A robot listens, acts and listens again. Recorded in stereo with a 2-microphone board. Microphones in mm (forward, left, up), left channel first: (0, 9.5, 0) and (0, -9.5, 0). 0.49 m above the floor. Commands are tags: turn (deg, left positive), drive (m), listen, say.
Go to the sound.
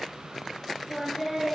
<turn deg="-30"/>
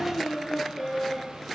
<turn deg="25"/>
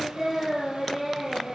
<turn deg="-15"/>
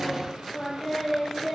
<drive m="1.0"/>
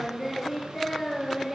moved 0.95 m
<drive m="1.0"/>
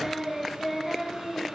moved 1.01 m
<drive m="1.0"/>
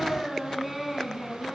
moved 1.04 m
<drive m="1.0"/>
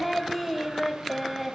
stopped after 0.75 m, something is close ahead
<say>Arrived at the singing, straight ahead.</say>